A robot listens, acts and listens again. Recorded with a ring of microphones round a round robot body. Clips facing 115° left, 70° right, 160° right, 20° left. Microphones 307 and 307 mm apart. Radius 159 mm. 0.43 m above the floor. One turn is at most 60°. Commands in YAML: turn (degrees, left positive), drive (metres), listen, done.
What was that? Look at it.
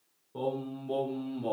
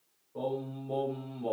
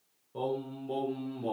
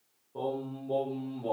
turn: 60
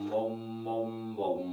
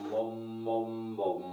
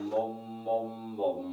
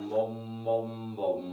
turn: 55
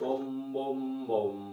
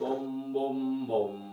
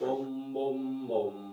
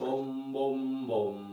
turn: -15
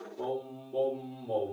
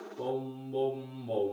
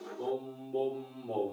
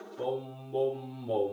turn: -20
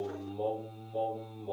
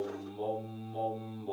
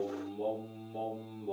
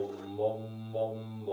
done: "Facing the singing, 1 to 2 m away."